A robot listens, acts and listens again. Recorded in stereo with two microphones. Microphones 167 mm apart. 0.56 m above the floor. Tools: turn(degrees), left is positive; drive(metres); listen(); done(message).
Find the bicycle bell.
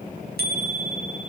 turn(degrees=-90)
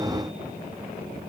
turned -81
turn(degrees=-10)
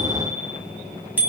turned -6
turn(degrees=-10)
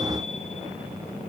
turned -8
listen()
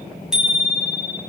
done("Facing the bicycle bell, 2 to 4 m away.")